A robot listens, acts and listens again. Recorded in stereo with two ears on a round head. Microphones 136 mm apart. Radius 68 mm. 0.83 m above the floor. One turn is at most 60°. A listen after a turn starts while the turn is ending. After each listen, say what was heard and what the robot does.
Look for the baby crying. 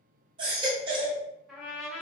The baby crying: about 35° right or 145° right. Turn 35° right.
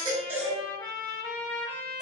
Found it: a baby crying, straight ahead, under 1 m away.